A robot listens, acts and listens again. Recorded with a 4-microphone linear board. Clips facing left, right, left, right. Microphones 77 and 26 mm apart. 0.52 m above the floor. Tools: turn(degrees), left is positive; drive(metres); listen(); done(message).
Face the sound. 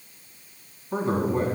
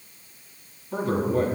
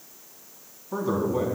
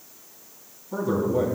turn(degrees=30)
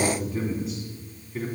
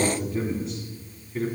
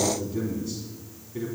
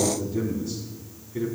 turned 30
done("Found it: a man speaking, straight ahead, over 4 m away.")